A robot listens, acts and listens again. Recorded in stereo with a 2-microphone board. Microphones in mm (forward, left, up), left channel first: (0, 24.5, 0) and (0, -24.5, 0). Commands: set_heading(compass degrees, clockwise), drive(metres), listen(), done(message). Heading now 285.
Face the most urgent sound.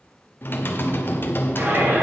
set_heading(325)
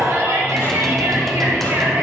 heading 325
set_heading(60)
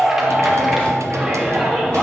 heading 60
done("Facing the shout, 2 to 4 m away.")